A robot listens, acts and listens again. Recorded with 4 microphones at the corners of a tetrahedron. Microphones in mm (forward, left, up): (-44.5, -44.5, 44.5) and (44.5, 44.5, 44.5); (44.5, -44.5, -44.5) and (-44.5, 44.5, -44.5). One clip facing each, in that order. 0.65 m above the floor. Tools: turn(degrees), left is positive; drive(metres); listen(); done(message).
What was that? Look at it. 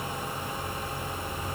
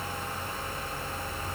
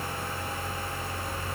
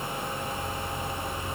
listen()
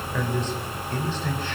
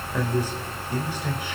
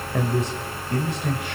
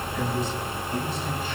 turn(degrees=-30)
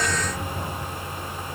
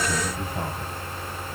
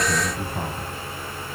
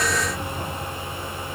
listen()
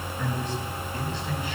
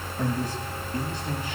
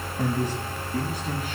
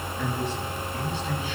done("Found it: a man speaking, straight ahead.")